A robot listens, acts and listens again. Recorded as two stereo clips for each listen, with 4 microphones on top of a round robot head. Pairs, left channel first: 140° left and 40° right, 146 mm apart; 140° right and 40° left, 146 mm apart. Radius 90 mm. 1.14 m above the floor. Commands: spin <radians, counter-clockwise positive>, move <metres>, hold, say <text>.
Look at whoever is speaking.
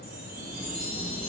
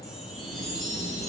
hold
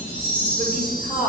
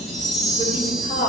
spin -1.57
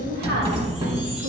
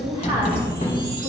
hold
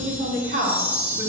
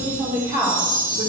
spin -0.44
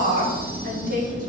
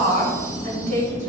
say Facing the woman speaking, 2 to 4 m away.